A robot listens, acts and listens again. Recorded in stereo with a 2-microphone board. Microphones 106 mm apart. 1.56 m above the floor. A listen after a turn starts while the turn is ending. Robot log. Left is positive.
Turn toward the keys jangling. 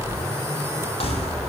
note: The keys jangling: about 65° left or 115° left.
cmd yaw +65
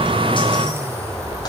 cmd idle
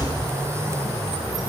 cmd idle
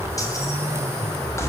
note: So it is at 25° left.
cmd yaw +25
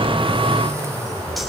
cmd idle
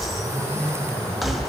end: Facing the keys jangling.